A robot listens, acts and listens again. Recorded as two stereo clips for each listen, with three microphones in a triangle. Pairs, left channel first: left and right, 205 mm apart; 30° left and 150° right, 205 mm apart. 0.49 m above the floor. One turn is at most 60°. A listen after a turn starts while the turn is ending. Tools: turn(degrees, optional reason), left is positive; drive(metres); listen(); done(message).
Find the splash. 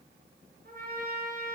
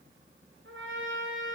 listen()
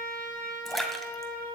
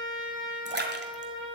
turn(degrees=60, reason="The splash: straight behind.")
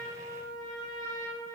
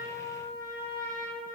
turn(degrees=60, reason="Nothing new. It was at 120° left.")
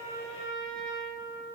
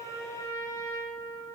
turn(degrees=60, reason="Nothing new. It was at 60° left.")
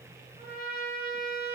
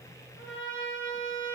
done("I heard a splash from this way, but can't make it out now.")